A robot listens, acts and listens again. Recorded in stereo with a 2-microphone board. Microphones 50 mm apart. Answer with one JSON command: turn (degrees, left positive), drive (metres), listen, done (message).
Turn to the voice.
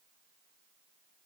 {"listen": true}
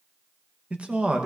{"turn": -20}
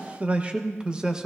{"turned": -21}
{"turn": -30}
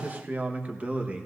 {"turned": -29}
{"turn": -25}
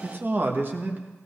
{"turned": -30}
{"turn": -140}
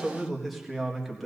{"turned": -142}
{"done": "Found it: a man speaking, straight ahead, 1 to 2 m away."}